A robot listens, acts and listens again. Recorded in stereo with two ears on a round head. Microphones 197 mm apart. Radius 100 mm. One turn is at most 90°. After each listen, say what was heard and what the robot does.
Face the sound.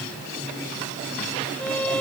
Turn 30° left.
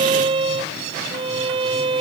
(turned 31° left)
So it is at 25° right. Turn 25° right.
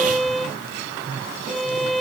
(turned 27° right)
Found it: a violin, straight ahead.